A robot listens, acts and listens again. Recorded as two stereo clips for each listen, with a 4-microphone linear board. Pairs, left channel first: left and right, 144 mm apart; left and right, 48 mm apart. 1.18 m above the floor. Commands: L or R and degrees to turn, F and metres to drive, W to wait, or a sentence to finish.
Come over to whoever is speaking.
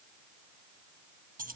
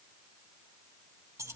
W
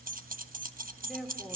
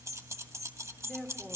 L30
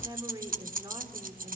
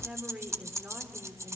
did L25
R30
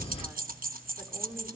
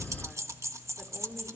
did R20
R10
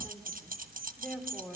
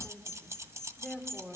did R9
F1.0
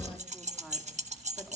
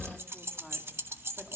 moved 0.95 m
F1.0
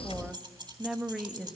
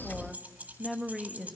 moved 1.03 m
F1.0
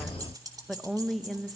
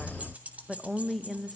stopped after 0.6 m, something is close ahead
Arrived at the woman speaking, straight ahead.